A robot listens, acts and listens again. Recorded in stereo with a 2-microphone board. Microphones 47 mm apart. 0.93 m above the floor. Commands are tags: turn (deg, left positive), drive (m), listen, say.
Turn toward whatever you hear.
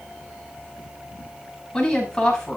<turn deg="15"/>
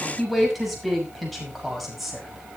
<turn deg="30"/>
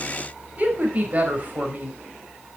<turn deg="-35"/>
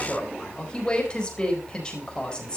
<turn deg="20"/>
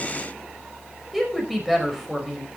<say>Found it: a woman speaking, straight ahead, over 4 m away.</say>